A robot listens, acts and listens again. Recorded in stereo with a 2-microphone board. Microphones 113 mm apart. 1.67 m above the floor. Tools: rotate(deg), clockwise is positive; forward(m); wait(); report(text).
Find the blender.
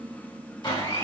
rotate(-40)
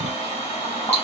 rotate(-100)
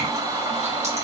rotate(35)
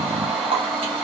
rotate(10)
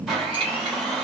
report("Facing the blender, 1 to 2 m away.")